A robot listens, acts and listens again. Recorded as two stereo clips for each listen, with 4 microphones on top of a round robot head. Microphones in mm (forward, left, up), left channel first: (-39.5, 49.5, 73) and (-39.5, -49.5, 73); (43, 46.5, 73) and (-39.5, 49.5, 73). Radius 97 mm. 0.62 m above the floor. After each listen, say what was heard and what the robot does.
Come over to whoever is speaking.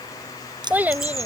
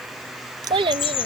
The child speaking: 165° right. Turn 165° right.
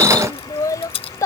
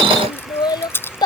The child speaking is now 30° left. Turn 30° left.
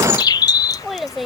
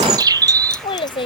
Drive 1.0 m forward.
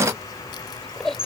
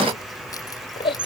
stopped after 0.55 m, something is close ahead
Blocked. The child speaking is further on, straight ahead.